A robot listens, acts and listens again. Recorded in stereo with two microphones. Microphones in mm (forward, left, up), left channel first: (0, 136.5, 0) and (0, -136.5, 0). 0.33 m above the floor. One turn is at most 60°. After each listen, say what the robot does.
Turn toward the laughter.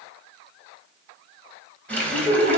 Turn 35° right.
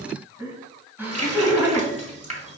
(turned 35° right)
Turn 10° right.
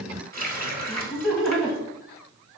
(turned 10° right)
Found it: laughter, straight ahead.